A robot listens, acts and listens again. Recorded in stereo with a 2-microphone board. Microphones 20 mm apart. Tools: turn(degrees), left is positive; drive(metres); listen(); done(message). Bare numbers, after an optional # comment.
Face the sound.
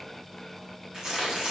# The tearing paper: about 45° right or 135° right.
turn(-45)
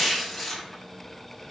done("Facing the tearing paper.")